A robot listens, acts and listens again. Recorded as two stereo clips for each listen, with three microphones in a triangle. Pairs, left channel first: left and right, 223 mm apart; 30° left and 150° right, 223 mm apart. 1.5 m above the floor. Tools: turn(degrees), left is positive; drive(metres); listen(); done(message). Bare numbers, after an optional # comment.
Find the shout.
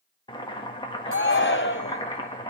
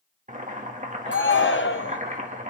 # The shout: 60° left.
turn(60)
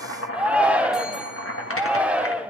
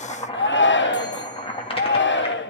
done("Found it: a shout, straight ahead.")